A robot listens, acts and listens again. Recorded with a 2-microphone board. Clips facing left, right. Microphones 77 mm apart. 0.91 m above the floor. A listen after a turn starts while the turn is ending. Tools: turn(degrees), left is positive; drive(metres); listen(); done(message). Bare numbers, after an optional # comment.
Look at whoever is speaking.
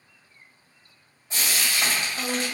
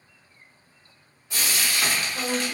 # The woman speaking: about 20° right or 160° right.
turn(-20)
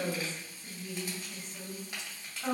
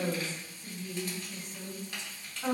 # So it is at 140° right.
turn(-140)
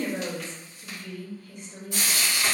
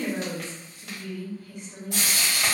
# The woman speaking is now 25° right.
turn(-25)
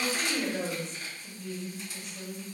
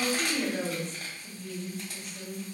# The woman speaking is now 10° right.
turn(-10)
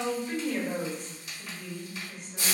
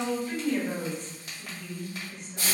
done("Found it: a woman speaking, straight ahead.")